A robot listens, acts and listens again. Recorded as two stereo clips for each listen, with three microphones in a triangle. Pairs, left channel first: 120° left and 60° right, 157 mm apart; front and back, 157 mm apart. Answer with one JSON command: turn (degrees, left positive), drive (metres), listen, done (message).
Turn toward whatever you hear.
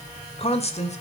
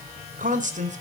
{"turn": 155}
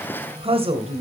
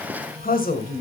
{"turn": -15}
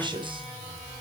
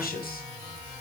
{"done": "Facing the woman speaking, 2 to 4 m away."}